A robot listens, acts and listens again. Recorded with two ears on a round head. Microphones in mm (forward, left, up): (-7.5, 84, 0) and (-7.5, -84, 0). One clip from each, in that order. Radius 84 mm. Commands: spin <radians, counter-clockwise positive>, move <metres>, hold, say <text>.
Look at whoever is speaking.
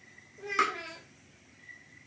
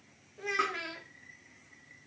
spin -1.05
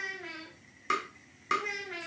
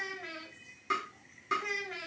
spin -0.26
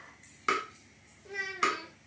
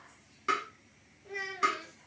say Found it: a child speaking, straight ahead.